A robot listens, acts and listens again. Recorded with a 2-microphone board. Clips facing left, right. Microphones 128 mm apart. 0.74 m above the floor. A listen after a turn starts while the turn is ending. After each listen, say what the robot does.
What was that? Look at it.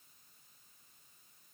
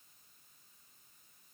Keep listening.
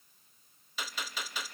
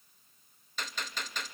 Turn 30° left.
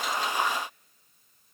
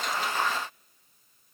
Keep listening.
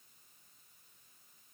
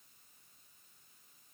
I heard a gunshot, but can't make it out now. It was about 25° right or 145° left.